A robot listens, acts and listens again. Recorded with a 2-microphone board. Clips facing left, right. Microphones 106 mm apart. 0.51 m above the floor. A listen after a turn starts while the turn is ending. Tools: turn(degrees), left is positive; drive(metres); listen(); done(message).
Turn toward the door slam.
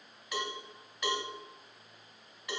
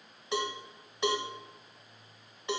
listen()
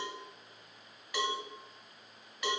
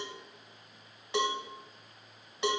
listen()
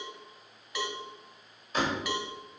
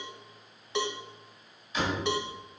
turn(degrees=45)
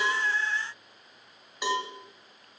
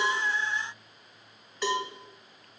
listen()
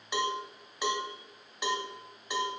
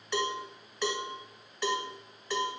done("I heard a door slam, but can't make it out now. It was about straight ahead or 90° left.")